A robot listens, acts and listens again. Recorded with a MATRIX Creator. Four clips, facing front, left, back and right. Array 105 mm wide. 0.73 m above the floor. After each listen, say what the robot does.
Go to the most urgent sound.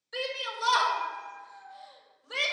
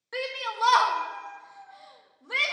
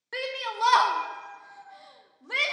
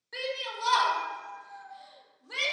Turn 155° left.
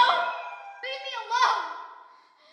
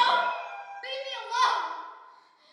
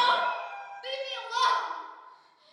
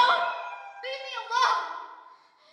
Drive 1.0 m forward.
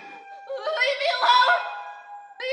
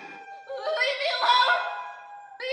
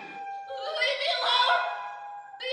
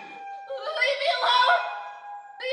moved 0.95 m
Turn 15° left.
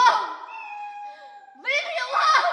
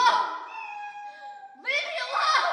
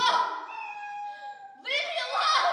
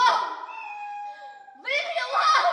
Drive 1.0 m forward.
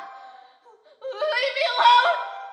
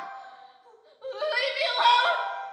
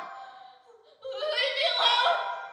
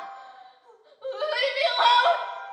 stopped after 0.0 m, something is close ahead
I am next to the shout.